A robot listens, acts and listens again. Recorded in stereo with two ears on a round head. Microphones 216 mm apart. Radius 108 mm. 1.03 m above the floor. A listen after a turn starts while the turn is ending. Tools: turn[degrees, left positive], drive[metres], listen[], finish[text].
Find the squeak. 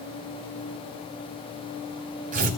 Action: listen[]
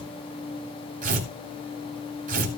Action: listen[]
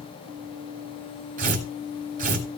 Action: finish[I can't make out a squeak to turn to.]